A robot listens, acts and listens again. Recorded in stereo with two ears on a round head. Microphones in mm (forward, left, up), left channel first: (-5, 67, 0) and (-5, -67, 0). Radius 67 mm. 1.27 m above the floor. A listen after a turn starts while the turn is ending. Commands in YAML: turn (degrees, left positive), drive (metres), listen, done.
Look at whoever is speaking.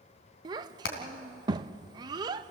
turn: -25
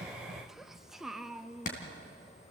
done: "Facing the child speaking."